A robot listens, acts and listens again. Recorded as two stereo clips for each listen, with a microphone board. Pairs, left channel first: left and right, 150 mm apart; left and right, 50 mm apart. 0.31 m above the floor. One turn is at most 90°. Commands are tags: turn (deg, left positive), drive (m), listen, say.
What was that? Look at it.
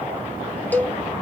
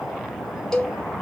<turn deg="30"/>
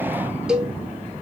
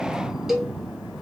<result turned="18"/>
<say>Found it: a cowbell, straight ahead, 1 to 2 m away.</say>